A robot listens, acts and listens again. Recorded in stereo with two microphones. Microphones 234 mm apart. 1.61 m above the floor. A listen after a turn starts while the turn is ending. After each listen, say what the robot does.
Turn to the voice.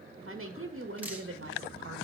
Turn 65° right.
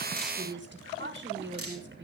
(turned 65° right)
Turn 50° right.
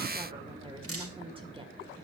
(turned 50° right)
Turn 20° right.
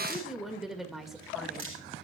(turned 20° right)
Found it: a woman speaking, straight ahead.